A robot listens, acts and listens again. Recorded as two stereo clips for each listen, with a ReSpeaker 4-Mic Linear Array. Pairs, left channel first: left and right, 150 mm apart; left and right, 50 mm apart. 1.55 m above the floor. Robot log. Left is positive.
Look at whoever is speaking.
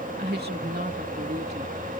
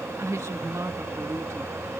cmd yaw -90
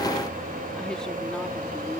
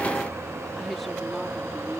cmd idle
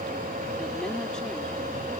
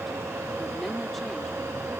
cmd idle
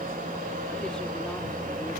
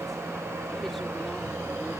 end: I heard a woman speaking from this way, but can't make it out now.